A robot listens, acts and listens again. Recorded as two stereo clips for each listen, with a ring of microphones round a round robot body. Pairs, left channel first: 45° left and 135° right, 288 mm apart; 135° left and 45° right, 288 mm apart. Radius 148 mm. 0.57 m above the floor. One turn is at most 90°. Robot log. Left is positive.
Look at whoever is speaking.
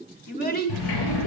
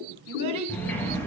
note: The child speaking: 15° right.
cmd yaw -15
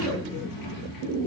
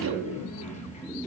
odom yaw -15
cmd idle
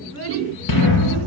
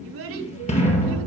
end: Facing the child speaking, 2 to 4 m away.